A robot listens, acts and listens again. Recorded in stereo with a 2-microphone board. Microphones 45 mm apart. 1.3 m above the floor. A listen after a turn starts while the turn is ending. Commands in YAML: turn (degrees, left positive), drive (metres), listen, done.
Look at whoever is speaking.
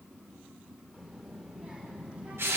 turn: -30
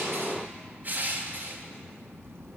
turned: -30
turn: -100
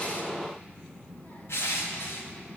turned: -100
turn: 50
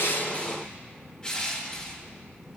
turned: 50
done: "Facing the child speaking."